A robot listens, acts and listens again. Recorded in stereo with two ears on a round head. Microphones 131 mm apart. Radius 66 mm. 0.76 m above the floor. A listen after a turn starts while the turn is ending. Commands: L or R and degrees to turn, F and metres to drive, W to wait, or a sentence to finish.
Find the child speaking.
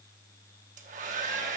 W
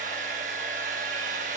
W
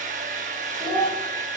R30
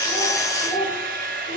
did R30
L45
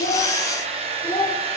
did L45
Found it: a child speaking, straight ahead, 1 to 2 m away.